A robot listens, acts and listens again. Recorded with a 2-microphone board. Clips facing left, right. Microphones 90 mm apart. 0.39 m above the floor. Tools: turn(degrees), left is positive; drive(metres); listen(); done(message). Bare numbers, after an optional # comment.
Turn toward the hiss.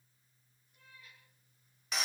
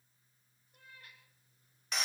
listen()
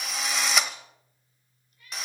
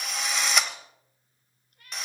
listen()
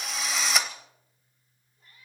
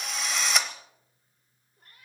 done("I can't make out a hiss, only a cat meowing and a drill.")